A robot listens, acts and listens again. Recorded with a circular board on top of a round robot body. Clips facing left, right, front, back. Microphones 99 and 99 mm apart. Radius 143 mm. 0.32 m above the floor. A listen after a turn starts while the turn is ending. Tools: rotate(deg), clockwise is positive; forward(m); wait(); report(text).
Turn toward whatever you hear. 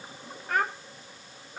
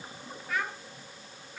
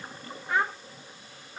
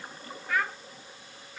rotate(-50)
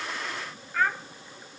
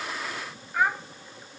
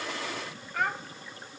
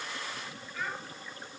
rotate(15)
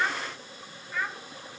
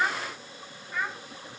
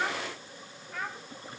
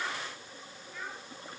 report("Facing the child speaking.")